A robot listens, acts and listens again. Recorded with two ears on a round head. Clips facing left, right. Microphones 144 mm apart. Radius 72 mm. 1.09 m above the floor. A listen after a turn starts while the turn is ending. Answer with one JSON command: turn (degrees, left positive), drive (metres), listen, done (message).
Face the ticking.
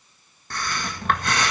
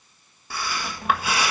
{"listen": true}
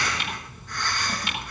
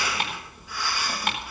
{"turn": -45}
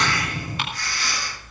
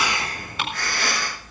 {"turn": -90}
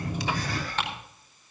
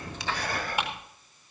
{"turn": -10}
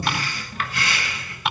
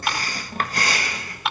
{"done": "Facing the ticking, over 4 m away."}